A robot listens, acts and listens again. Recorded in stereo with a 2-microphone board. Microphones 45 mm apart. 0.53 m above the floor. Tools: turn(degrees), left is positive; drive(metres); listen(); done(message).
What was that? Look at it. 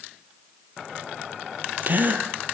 turn(degrees=-40)
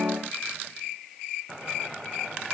listen()
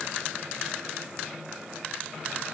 done("I heard a gasp, but can't make it out now. It was about straight ahead or 100° right.")